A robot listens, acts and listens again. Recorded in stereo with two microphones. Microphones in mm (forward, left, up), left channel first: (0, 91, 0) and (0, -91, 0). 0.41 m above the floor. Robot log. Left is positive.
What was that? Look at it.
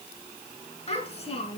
note: The child speaking: about 35° left or 145° left.
cmd yaw +35
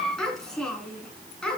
end: Found it: a child speaking, straight ahead, 2 to 4 m away.